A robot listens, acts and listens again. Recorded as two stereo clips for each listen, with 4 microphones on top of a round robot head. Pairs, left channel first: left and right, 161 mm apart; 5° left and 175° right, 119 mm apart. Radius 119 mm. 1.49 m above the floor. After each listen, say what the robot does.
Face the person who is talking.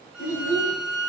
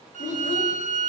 Turn 60° left.
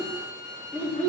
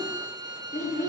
Turn 15° left.
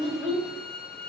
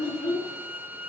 Facing the child speaking, 2 to 4 m away.